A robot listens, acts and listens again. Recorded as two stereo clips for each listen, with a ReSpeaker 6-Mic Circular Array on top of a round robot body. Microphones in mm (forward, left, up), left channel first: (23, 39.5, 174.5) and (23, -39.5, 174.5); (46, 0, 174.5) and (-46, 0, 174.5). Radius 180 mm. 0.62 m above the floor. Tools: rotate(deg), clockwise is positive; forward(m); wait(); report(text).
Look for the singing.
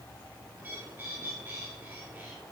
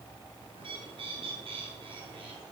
wait()
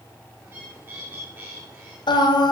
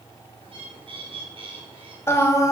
rotate(-60)
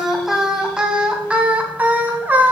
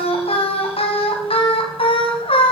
rotate(20)
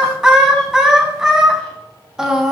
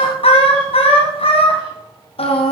rotate(10)
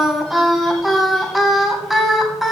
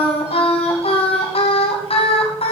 report("Facing the singing, 2 to 4 m away.")